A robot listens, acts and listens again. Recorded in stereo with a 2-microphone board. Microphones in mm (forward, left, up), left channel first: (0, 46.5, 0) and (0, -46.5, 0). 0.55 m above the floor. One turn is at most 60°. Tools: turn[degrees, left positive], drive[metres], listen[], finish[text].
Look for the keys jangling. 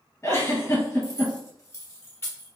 Thought: The keys jangling: about 30° left or 150° left.
Action: turn[30]
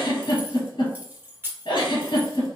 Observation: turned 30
Thought: So it is at 25° right.
Action: turn[-25]
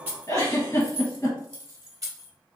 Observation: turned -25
Thought: The keys jangling is now 40° right.
Action: turn[-40]
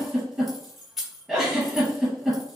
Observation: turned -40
Action: finish[Facing the keys jangling, 1 to 2 m away.]